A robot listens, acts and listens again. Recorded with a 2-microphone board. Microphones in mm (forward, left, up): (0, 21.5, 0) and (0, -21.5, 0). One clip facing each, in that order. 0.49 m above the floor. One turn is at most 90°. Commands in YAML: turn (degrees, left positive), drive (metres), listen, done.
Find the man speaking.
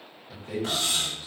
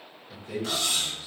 turn: 50
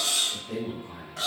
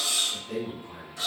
done: "Found it: a man speaking, straight ahead."